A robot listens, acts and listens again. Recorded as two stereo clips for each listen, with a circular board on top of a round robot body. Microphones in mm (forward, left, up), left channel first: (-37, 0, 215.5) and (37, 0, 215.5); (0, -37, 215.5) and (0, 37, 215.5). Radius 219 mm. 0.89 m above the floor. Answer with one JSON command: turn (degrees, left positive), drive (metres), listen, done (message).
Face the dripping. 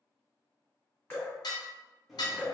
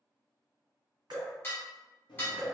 {"turn": 120}
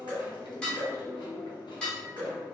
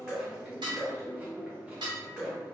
{"turn": 10}
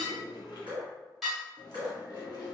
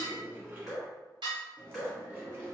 {"done": "Facing the dripping."}